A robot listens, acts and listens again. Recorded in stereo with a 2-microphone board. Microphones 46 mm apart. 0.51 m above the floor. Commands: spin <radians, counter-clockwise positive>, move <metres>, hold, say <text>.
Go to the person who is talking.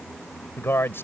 spin 1.13
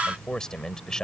spin 0.26
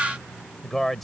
move 1.0
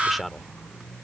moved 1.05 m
move 1.0
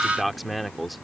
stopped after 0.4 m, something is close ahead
say I am next to the man speaking.